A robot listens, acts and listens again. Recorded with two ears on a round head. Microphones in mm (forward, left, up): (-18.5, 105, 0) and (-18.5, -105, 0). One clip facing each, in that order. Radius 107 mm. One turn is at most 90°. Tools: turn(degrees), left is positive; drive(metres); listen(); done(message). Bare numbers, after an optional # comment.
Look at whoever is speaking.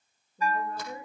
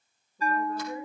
# The woman speaking: about 25° left or 155° left.
turn(25)
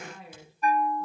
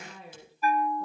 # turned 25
done("Facing the woman speaking, over 4 m away.")